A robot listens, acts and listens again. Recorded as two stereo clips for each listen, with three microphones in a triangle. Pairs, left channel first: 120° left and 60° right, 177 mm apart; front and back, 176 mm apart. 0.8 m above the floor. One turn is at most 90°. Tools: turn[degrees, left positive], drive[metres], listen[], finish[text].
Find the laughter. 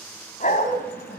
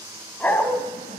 Thought: The laughter: 140° left.
Action: turn[90]
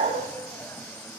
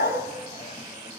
Thought: Nothing new. It was at 50° left.
Action: turn[50]
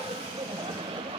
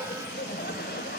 Action: finish[Facing the laughter, 2 to 4 m away.]